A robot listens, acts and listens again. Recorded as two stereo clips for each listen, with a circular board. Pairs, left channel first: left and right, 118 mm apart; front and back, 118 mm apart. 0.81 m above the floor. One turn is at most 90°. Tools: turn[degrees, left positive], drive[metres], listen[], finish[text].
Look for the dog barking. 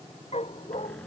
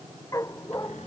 Thought: The dog barking: 60° left.
Action: turn[60]
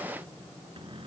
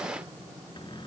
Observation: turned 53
Thought: Nothing new. It was at 10° left.
Action: turn[10]
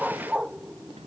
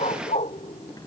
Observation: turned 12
Action: finish[Found it: a dog barking, straight ahead.]